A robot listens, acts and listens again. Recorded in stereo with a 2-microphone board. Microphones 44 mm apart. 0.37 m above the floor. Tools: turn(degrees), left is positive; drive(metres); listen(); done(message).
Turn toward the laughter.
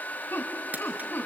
turn(degrees=45)
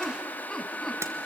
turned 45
turn(degrees=10)
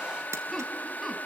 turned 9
listen()
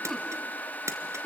done("Found it: laughter, straight ahead, 2 to 4 m away.")